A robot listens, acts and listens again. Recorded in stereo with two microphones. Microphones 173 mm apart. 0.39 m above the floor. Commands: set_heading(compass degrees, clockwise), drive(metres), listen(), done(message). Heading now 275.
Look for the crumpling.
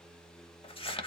set_heading(245)
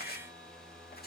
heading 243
set_heading(123)
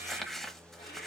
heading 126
done("Facing the crumpling, under 1 m away.")